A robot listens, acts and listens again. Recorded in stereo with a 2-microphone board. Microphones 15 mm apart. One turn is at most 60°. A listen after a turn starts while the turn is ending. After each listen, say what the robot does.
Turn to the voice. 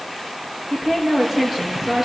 Turn 25° right.
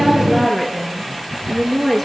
Found it: a woman speaking, straight ahead.